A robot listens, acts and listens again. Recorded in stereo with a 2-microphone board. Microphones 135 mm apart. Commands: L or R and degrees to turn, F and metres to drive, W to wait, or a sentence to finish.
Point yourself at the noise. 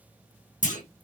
L65
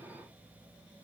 W
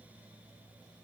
I heard a clunk, but can't make it out now. It was about straight ahead or 50° left.